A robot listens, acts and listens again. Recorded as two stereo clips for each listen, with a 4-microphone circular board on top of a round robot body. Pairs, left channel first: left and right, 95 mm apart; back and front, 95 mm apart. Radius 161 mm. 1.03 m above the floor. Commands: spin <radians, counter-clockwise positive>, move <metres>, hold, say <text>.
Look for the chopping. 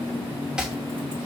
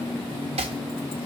spin -0.17
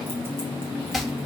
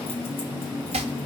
say Found it: chopping, straight ahead.